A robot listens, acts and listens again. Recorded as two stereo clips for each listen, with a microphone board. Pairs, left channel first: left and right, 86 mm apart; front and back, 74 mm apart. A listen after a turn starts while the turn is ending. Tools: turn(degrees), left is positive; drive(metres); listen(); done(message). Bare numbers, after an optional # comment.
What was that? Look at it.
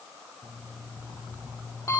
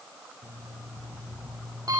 # The alarm clock: 145° left.
turn(145)
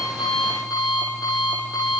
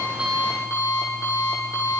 # The alarm clock is now 50° left.
turn(50)
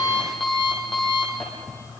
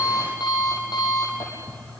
done("Found it: an alarm clock, straight ahead.")